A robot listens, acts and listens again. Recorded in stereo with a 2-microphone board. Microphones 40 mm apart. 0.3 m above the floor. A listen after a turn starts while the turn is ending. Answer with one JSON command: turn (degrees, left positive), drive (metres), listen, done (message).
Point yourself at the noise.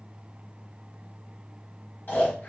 {"turn": 50}
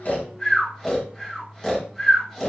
{"turn": 15}
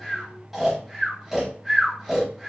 {"done": "Found it: snoring, straight ahead."}